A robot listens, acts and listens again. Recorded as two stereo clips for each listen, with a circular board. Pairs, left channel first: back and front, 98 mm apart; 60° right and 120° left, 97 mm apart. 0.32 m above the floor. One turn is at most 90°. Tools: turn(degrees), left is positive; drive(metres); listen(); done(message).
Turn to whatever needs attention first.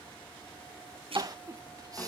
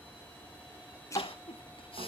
turn(degrees=-50)
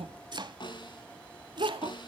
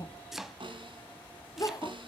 turn(degrees=-10)
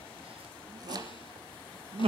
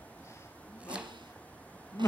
done("Facing the crying.")